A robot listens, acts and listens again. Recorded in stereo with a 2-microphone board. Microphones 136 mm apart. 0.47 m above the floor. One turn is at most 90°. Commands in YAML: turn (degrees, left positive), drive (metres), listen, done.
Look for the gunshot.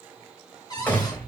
turn: 30
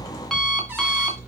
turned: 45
listen: true
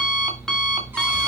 done: "I heard a gunshot, but can't make it out now. It was about 35° right or 125° left."